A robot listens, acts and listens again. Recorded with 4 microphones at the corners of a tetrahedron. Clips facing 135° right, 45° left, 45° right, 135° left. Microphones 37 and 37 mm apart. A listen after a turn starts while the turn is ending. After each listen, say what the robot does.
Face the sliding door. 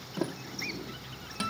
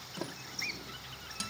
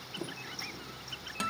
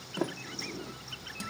Turn 150° left.
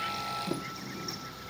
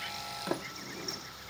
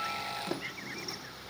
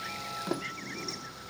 Turn 55° left.
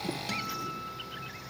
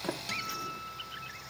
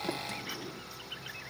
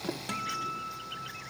Keep listening.
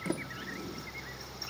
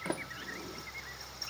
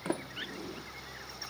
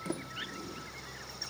Found it: a sliding door, straight ahead, 1 to 2 m away.